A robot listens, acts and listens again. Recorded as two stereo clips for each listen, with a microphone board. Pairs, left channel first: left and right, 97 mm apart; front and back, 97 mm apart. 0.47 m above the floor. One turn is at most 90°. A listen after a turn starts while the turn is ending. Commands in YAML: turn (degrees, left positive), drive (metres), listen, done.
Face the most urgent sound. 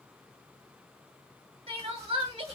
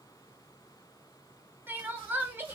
turn: -90
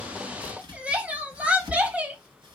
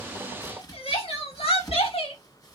turn: -10
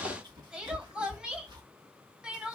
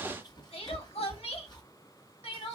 turn: -10
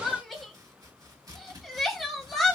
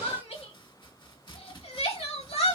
done: "Found it: crying, straight ahead."